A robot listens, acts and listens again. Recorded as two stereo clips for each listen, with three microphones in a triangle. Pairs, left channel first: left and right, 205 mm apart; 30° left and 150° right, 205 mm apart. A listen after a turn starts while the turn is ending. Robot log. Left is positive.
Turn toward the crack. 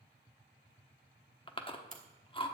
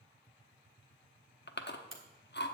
note: The crack: 140° right.
cmd yaw -140
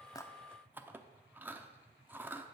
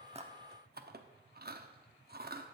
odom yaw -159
note: Nothing new. It was at 20° left.
cmd yaw +20
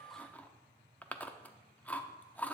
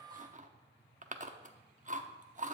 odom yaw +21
end: Facing where the crack came from. I can't hear it now.